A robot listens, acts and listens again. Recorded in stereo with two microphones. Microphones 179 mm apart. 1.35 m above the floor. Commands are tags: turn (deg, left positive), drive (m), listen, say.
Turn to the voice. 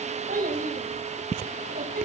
<turn deg="-50"/>
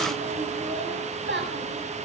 <turn deg="-80"/>
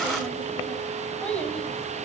<say>Found it: a child speaking, straight ahead, over 4 m away.</say>